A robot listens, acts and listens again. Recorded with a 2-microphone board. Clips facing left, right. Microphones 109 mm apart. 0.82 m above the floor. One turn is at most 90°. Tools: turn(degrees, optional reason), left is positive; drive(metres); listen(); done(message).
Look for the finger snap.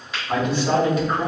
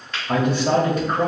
turn(degrees=30)
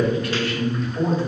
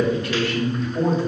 listen()
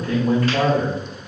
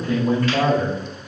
listen()
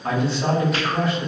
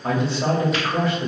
done("I heard a finger snap, but can't make it out now. It was about 25° right or 145° left.")